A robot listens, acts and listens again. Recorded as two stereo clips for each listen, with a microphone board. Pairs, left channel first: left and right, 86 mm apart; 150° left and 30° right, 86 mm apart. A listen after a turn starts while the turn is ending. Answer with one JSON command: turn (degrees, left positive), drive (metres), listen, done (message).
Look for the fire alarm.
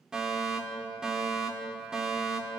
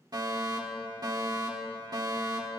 {"turn": -10}
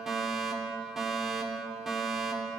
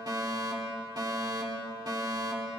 {"done": "Facing the fire alarm."}